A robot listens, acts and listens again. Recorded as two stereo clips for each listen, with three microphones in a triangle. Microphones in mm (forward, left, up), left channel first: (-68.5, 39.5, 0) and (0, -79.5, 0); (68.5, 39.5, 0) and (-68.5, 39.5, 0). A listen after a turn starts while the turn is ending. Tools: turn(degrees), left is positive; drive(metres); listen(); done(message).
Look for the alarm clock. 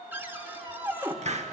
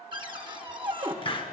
listen()
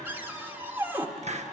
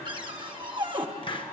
listen()
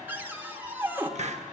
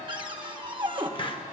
done("I can't make out an alarm clock, only a cupboard door and a hiss.")